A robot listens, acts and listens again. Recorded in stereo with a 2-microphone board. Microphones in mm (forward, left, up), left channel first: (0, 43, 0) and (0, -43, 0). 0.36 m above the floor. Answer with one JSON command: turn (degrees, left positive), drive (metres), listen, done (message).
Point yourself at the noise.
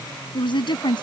{"turn": 65}
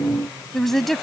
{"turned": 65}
{"done": "Facing the woman speaking."}